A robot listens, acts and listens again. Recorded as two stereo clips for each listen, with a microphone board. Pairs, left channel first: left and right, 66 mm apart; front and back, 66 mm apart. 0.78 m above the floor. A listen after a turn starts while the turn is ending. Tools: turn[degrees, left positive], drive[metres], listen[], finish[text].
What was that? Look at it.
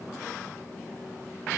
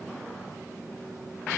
Action: listen[]
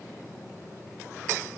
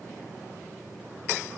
Action: listen[]
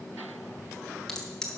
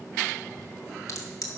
Thought: The crack: 10° left.
Action: turn[10]
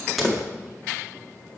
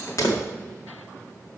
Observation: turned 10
Action: finish[Facing the crack, 1 to 2 m away.]